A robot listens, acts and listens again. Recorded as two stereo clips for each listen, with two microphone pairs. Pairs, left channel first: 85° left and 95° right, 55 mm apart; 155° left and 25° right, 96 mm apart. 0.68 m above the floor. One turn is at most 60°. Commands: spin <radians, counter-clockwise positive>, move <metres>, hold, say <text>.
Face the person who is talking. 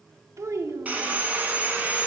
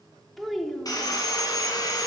spin -1.05
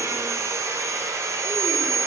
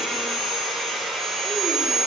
spin -0.96
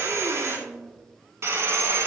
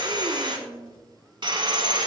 spin -0.35
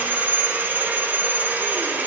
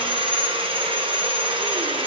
hold
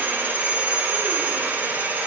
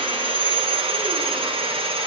hold
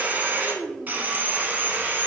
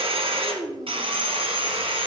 say Facing the child speaking.